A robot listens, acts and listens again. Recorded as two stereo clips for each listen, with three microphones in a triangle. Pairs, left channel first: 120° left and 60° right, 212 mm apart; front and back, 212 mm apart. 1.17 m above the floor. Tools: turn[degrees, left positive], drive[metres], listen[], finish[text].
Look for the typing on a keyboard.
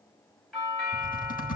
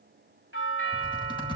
Thought: The typing on a keyboard: 65° left.
Action: turn[65]
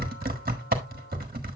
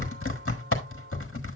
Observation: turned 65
Thought: The typing on a keyboard is now 15° right.
Action: turn[-15]
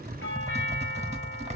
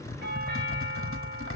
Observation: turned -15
Action: finish[Found it: typing on a keyboard, straight ahead, 1 to 2 m away.]